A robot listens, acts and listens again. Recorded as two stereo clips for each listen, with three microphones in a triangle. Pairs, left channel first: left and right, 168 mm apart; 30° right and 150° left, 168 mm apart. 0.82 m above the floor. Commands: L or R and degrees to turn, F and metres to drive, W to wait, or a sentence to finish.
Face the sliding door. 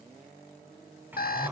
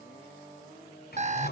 R10
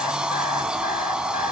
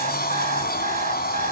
Found it: a sliding door, straight ahead, 2 to 4 m away.